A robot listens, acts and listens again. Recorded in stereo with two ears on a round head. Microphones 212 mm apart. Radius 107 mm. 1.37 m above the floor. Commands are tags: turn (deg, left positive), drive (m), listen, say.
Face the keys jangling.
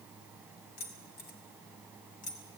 <turn deg="35"/>
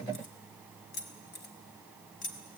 <turn deg="35"/>
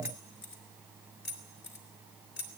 <turn deg="135"/>
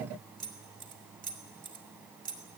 <turn deg="-35"/>
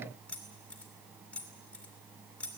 <say>Found it: keys jangling, straight ahead.</say>